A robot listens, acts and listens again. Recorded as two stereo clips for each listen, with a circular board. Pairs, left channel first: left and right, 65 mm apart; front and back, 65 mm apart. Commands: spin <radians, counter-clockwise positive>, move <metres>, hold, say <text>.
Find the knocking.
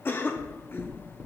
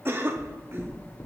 spin -0.35
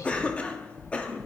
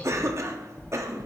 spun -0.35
say Found it: knocking, straight ahead.